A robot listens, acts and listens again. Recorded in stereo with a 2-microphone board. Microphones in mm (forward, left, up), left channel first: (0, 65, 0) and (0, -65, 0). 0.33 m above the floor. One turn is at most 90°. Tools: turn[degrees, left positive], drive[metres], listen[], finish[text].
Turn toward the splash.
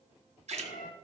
Thought: The splash: about 60° right or 120° right.
Action: turn[-60]
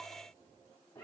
Action: listen[]
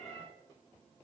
Action: finish[I heard a splash, but can't make it out now. It was about straight ahead or 60° right.]